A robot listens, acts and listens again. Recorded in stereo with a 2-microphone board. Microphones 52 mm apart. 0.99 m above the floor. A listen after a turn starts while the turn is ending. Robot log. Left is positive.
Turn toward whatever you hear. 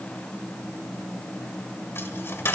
note: The dropped coin: about 50° left or 130° left.
cmd yaw +50
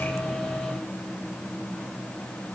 cmd idle
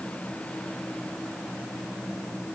end: I heard a dropped coin, but can't make it out now. It was about straight ahead or 80° left.